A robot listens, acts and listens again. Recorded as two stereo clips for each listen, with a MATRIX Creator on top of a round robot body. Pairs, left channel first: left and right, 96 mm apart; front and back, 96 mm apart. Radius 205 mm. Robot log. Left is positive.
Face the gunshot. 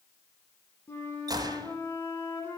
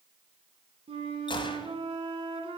note: The gunshot: 40° right.
cmd yaw -40
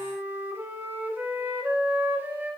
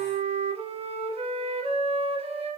end: I heard a gunshot from this way, but can't make it out now.